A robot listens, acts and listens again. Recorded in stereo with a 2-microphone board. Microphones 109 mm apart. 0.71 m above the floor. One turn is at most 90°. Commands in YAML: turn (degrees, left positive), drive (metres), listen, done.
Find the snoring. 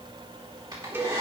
listen: true
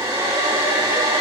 listen: true
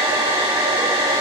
done: "I can't make out snoring, only a cowbell and a hair dryer."